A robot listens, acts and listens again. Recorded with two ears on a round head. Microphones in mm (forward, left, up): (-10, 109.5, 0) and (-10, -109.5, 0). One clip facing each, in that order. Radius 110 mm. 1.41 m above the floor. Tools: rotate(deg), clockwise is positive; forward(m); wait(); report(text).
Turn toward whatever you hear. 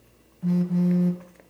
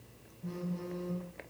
rotate(-75)
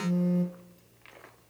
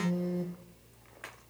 rotate(-15)
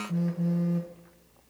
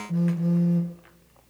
report("Facing the phone buzzing, 1 to 2 m away.")